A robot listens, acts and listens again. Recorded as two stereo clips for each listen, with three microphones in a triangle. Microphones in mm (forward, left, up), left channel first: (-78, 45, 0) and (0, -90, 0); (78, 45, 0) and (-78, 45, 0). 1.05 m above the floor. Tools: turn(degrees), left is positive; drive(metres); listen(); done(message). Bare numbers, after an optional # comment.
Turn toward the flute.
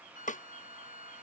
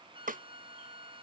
# The flute: 15° right.
turn(-15)
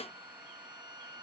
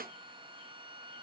done("Found it: a flute, straight ahead.")